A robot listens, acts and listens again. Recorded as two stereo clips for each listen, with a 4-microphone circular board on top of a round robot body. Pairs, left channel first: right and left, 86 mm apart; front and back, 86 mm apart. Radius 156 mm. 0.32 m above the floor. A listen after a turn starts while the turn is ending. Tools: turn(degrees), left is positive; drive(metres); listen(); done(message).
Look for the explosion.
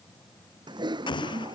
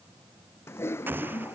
turn(degrees=-115)
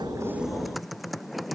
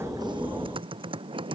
done("I heard an explosion from this way, but can't make it out now.")